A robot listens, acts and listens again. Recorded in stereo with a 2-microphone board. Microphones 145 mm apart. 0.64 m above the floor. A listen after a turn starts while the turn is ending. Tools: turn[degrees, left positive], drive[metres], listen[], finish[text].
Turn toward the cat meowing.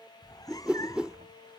Thought: The cat meowing: about 25° left or 155° left.
Action: turn[25]
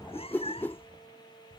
Thought: The cat meowing: about 40° left or 140° left.
Action: turn[40]
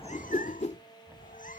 Thought: So it is at 105° left.
Action: turn[105]
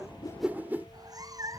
Thought: The cat meowing is now 25° right.
Action: turn[-25]
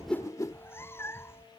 Thought: The cat meowing is now 15° left.
Action: turn[15]
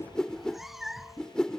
Action: finish[Found it: a cat meowing, straight ahead.]